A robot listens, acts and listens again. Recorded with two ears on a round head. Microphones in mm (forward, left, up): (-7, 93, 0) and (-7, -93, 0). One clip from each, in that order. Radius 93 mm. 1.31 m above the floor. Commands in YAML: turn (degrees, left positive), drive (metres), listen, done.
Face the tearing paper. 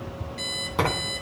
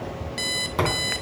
turn: 30
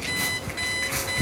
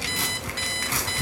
turn: -35
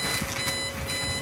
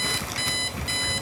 listen: true
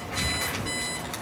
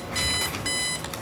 listen: true
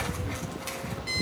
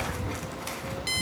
done: "I heard tearing paper from this way, but can't make it out now."